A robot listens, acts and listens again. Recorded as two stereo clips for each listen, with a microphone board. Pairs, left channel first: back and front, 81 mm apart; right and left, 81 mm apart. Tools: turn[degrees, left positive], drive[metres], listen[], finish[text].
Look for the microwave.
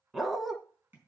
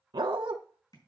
Action: listen[]
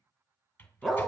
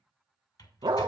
Thought: The microwave: 115° right.
Action: turn[-115]
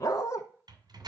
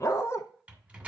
Thought: The microwave is now 20° left.
Action: turn[20]
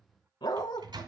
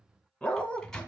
Action: finish[Facing the microwave.]